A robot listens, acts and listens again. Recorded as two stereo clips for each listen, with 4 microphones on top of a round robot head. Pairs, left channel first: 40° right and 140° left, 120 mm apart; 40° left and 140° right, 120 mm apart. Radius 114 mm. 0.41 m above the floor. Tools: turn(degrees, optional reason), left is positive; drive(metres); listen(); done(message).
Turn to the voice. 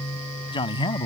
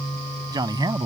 turn(degrees=-85, reason="The man speaking: 85° right.")
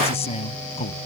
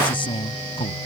done("Facing the man speaking.")